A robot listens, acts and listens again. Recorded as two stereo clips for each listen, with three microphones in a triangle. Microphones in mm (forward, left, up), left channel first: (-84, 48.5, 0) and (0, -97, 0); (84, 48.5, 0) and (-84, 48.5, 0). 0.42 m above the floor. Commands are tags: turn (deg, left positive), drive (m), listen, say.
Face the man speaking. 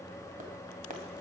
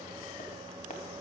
<listen/>
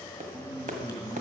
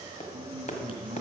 <turn deg="-125"/>
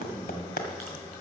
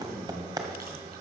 <listen/>
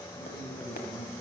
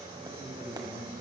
<turn deg="50"/>
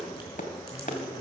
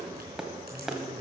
<listen/>
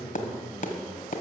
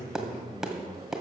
<turn deg="25"/>
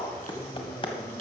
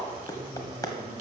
<listen/>
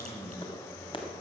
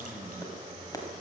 <listen/>
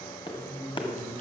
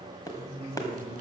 <say>Facing the man speaking, over 4 m away.</say>